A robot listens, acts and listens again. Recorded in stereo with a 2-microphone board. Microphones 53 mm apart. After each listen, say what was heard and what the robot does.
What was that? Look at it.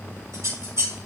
Turn 90° right.
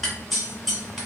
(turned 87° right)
Facing the scissors, 1 to 2 m away.